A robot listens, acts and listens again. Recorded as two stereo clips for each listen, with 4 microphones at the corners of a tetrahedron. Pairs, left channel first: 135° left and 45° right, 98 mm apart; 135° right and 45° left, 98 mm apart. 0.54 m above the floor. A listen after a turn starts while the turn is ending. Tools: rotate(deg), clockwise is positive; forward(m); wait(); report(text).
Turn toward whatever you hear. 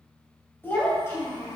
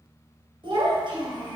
rotate(-75)
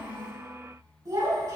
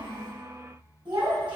rotate(-10)
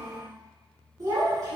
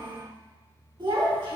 rotate(-10)
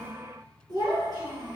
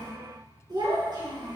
report("Facing the child speaking, over 4 m away.")